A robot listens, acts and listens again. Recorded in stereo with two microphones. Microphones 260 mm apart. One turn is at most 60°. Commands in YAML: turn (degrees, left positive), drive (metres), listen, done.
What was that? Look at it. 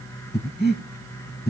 turn: 35
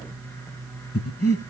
turn: 60
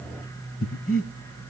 turn: 60
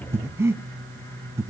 turn: -10
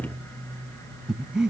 done: "Facing the breathing."